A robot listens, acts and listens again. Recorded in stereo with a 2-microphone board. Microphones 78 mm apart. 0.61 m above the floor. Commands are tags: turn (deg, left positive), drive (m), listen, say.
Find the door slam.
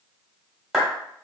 <listen/>
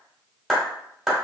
<listen/>
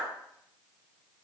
<say>I can't make out a door slam, only a clap.</say>